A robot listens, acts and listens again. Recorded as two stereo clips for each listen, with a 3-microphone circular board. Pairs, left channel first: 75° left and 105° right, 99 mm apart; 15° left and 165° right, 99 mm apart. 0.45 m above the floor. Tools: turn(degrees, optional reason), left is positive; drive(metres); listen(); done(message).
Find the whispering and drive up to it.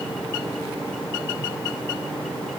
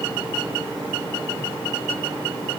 listen()
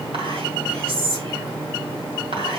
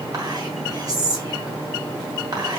turn(degrees=-120, reason="The whispering: 120° right.")
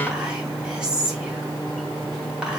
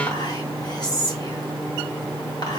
turn(degrees=-25, reason="The whispering is now 25° right.")
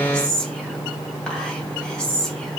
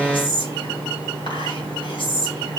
drive(metres=1.0)
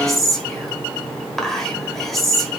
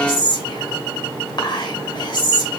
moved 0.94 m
turn(degrees=-10, reason="The whispering is now 10° right.")
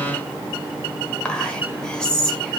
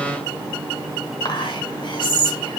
drive(metres=1.0)
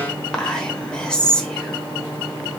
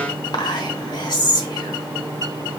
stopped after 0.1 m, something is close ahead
done("Arrived at the whispering, straight ahead.")